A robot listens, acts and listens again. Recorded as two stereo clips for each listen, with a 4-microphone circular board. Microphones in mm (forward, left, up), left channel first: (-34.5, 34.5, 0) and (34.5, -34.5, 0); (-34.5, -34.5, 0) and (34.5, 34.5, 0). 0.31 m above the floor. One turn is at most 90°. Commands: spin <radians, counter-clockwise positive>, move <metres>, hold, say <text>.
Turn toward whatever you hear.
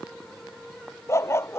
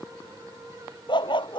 spin -1.57
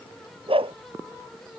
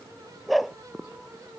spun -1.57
spin -0.79
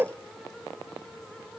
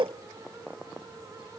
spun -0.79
spin 0.35
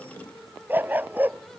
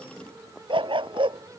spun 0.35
spin 0.44
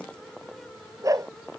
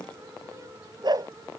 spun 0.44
say Found it: a dog barking, straight ahead.